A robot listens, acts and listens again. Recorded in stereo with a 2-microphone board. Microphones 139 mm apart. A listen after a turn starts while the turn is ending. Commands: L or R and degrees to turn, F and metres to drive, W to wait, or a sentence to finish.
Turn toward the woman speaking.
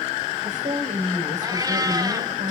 R60
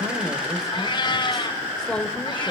Found it: a woman speaking, straight ahead.